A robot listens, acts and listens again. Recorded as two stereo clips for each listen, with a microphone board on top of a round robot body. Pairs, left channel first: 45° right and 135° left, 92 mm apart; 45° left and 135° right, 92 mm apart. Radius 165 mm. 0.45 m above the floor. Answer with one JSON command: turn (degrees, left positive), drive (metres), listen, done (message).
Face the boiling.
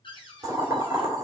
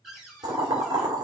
{"turn": -175}
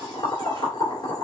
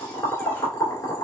{"done": "Facing the boiling."}